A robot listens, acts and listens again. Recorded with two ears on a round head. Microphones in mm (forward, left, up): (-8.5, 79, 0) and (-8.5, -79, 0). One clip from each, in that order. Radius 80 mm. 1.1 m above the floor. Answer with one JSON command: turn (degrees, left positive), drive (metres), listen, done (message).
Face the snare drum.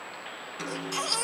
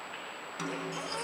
{"turn": -15}
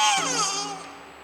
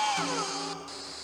{"listen": true}
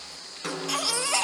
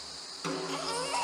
{"done": "Found it: a snare drum, straight ahead, over 4 m away."}